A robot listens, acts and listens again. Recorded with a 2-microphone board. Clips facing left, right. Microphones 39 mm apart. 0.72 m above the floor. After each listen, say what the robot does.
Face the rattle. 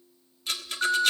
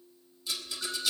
Turn 55° left.
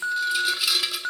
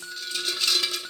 Turn 10° left.
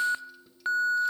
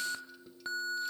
Keep listening.
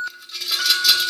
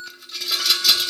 Facing the rattle.